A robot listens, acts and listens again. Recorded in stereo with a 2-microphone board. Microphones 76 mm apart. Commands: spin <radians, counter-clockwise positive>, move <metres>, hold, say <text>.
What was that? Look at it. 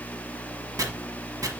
spin -0.87
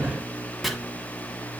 say Found it: chopping, straight ahead.